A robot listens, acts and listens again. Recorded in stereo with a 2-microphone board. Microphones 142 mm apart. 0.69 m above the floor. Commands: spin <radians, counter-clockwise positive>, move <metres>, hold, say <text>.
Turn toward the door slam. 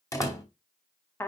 spin 0.44
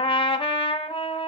hold
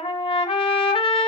say I heard a door slam, but can't make it out now. It was about straight ahead or 130° left.